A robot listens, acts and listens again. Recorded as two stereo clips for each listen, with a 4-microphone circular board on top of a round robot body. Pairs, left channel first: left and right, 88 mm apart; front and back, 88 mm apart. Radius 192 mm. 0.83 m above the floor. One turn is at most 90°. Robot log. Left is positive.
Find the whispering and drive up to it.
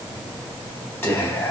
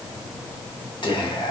note: The whispering: 30° left.
cmd yaw +30
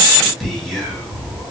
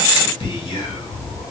cmd fwd 1.0
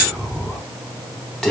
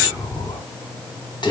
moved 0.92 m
note: The whispering is now 10° left.
cmd yaw +10
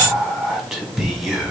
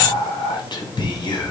cmd fwd 1.0
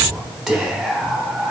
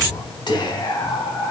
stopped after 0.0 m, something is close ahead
end: I am next to the whispering.